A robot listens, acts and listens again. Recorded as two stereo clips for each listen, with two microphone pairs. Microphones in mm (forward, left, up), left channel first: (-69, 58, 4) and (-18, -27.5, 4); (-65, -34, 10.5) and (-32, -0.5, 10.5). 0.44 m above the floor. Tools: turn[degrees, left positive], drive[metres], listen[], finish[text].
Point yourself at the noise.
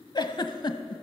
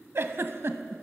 Thought: The giggle: 80° left.
Action: turn[80]
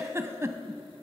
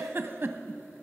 Action: finish[Facing the giggle.]